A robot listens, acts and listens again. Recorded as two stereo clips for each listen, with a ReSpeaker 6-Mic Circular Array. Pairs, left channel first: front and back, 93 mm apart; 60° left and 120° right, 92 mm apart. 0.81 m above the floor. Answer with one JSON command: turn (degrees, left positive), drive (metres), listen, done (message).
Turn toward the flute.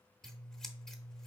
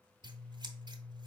{"listen": true}
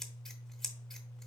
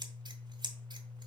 {"listen": true}
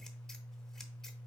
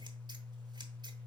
{"done": "I can't make out a flute, only scissors."}